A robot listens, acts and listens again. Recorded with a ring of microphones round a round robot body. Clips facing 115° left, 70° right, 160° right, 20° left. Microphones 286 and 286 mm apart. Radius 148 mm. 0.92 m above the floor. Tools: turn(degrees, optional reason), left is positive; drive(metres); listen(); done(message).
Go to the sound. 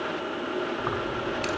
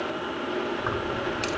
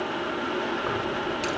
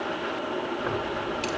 turn(degrees=-75, reason="The keys jangling: 75° right.")
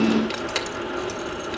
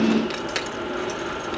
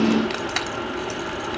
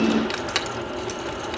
turn(degrees=25, reason="The keys jangling is now 25° left.")
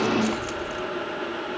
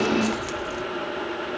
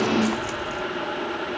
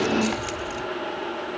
drive(metres=1.0)
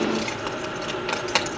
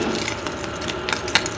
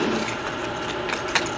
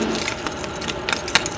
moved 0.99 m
turn(degrees=-10, reason="The keys jangling is now 10° right.")
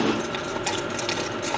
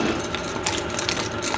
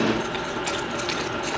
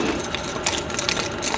drive(metres=1.0)
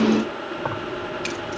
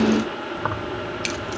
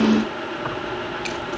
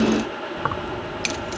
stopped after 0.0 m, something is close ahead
done("Arrived at the keys jangling, straight ahead.")